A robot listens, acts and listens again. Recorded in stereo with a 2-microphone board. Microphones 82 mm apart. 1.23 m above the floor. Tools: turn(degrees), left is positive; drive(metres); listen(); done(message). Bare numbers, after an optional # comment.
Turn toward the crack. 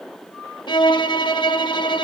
listen()
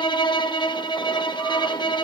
listen()
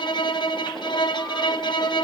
done("I can't make out a crack to turn to.")